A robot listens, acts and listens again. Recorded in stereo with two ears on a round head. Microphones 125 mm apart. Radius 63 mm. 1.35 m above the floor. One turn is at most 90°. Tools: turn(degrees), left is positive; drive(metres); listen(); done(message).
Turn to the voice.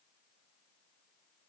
listen()
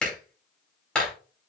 listen()
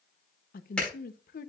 turn(degrees=65)
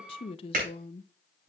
turn(degrees=40)
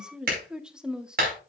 done("Found it: a woman speaking, straight ahead.")